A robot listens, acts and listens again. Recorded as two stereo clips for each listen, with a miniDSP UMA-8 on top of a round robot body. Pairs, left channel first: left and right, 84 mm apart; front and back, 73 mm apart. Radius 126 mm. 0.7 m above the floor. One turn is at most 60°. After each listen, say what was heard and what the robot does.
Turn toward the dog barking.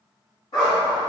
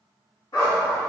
The dog barking: 45° left. Turn 45° left.
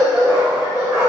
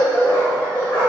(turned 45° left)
Found it: a dog barking, straight ahead.